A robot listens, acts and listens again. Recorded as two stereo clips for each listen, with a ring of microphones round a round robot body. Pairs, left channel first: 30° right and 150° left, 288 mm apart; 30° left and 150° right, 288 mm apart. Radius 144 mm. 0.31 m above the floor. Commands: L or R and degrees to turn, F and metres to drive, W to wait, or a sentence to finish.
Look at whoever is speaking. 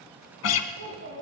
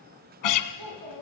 R160
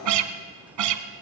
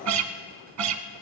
W
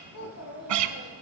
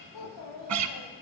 L10
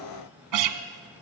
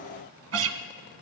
W
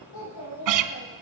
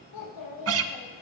Found it: a child speaking, straight ahead.